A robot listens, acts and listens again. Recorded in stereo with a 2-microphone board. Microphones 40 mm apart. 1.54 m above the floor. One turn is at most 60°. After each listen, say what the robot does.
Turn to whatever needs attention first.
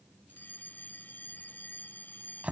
Turn 50° left.
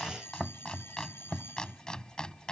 Turn 60° left.
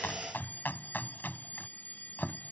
Turn 50° left.
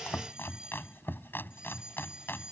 Turn 20° right.
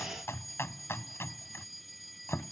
Found it: a fire alarm, straight ahead.